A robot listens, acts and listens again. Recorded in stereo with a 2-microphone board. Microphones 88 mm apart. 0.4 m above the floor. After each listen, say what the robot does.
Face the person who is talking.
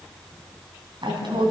Turn 65° right.
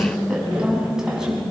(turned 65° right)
Turn 10° right.
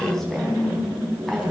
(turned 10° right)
Facing the woman speaking.